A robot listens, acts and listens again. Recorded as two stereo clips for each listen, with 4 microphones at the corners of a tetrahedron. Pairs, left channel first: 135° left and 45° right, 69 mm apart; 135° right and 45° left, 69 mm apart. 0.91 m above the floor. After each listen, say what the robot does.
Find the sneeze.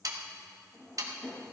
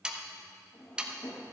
Keep listening.
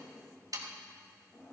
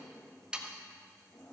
Keep listening.
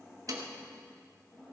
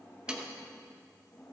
I can't make out a sneeze, only a drawer and sawing.